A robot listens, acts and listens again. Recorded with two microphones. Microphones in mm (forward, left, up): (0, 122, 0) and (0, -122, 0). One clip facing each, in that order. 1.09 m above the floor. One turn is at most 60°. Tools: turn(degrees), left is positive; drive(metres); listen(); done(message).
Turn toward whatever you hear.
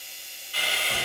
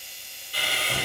turn(degrees=-35)
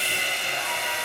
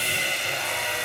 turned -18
turn(degrees=-60)
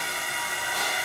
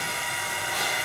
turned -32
turn(degrees=-60)
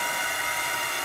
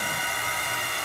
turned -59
turn(degrees=-35)
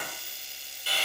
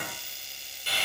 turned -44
done("Found it: sawing, straight ahead.")